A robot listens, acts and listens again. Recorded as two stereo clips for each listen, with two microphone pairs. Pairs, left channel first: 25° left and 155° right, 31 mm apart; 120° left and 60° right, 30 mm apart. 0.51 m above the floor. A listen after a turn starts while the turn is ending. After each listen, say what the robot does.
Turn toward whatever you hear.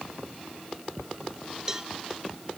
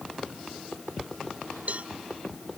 Turn 85° right.
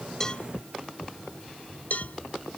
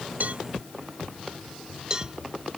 Facing the cowbell.